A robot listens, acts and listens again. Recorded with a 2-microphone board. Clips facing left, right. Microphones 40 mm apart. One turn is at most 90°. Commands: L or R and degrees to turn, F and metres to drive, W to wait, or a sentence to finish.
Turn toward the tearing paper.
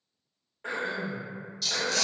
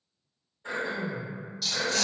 R30
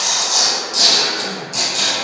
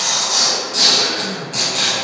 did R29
R90
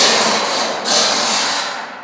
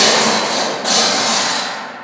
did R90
R50
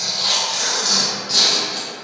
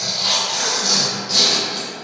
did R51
Facing the tearing paper.